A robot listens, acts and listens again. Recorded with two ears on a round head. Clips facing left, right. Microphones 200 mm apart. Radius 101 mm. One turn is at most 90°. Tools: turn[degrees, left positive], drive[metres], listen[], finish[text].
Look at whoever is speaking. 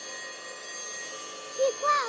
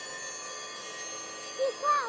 Thought: The child speaking: about 40° left or 140° left.
Action: turn[40]
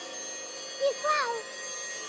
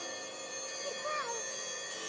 Thought: So it is at 100° left.
Action: turn[90]
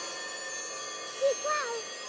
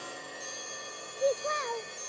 Thought: The child speaking is now 10° left.
Action: turn[10]
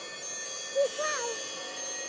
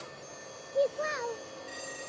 Action: finish[Facing the child speaking.]